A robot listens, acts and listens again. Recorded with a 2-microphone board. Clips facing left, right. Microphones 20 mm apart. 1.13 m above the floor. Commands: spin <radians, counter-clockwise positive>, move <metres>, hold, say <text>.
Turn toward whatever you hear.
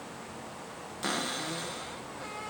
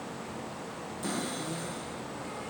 spin 0.61
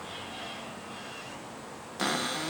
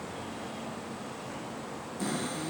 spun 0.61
spin 1.83
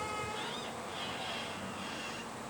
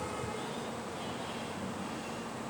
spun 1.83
hold
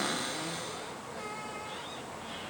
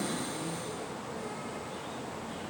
spin 0.79
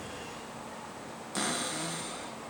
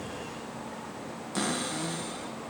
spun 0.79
say Found it: a cupboard door, straight ahead.